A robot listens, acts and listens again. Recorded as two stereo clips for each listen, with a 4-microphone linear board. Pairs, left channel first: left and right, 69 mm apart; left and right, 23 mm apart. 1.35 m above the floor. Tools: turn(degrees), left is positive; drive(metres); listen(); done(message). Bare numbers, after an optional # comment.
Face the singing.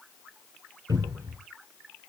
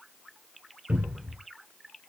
listen()
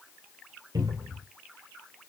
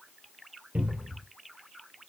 listen()
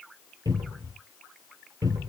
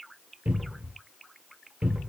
done("I can't make out singing, only a cupboard door.")